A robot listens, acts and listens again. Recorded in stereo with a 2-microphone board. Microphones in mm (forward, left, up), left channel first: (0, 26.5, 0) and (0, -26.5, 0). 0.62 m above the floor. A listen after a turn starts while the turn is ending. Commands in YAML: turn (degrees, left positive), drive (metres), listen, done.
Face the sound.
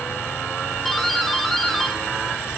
turn: 30
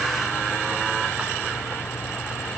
listen: true
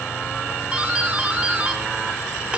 turn: -30
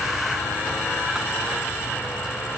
listen: true
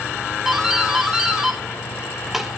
done: "Facing the doorbell."